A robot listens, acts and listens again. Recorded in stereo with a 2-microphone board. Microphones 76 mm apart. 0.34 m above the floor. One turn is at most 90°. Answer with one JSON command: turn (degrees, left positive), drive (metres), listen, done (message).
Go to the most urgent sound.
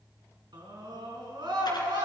{"turn": -70}
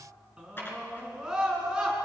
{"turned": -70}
{"turn": -10}
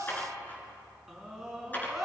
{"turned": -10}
{"drive": 1.0}
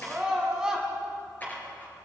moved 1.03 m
{"turn": -10}
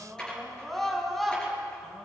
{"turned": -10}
{"drive": 1.0}
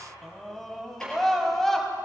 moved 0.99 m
{"drive": 1.0}
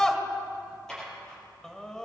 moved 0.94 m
{"turn": 15}
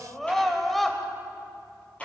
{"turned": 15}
{"drive": 1.0}
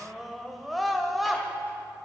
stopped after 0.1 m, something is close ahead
{"done": "Arrived at the scream, straight ahead."}